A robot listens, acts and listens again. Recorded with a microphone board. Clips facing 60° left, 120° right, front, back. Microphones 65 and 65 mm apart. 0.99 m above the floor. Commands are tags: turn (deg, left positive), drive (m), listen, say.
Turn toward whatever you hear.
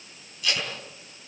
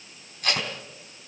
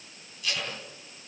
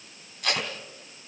<turn deg="-160"/>
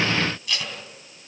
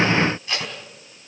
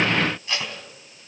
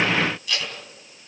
<turn deg="-60"/>
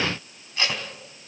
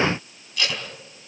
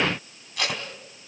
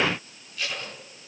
<say>Found it: tape being pulled, straight ahead.</say>